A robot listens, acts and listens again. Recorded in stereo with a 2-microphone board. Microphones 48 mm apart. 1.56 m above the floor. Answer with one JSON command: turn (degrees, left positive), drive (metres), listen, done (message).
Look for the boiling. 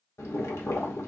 {"turn": 90}
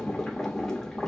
{"turn": 10}
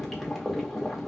{"done": "Facing the boiling."}